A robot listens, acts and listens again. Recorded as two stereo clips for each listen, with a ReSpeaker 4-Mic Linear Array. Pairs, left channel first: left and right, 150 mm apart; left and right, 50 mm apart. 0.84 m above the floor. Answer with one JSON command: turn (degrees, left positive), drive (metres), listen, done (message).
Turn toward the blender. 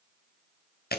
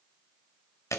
{"listen": true}
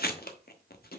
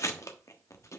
{"listen": true}
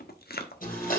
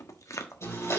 {"turn": 60}
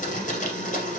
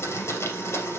{"turn": 55}
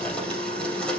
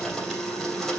{"turn": 10}
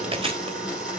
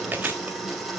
{"done": "Facing the blender."}